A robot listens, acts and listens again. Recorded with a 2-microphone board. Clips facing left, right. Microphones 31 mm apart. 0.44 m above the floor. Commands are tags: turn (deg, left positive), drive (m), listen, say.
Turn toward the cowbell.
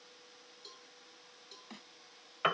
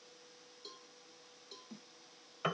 <turn deg="-30"/>
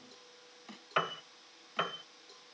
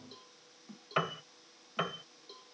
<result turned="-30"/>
<turn deg="-145"/>
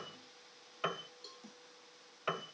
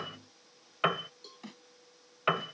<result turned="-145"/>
<say>Facing the cowbell.</say>